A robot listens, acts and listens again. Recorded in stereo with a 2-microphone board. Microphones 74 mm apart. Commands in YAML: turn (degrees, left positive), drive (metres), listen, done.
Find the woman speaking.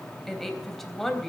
turn: 30
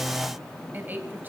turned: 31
turn: -30
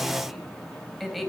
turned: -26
done: "Facing the woman speaking, 2 to 4 m away."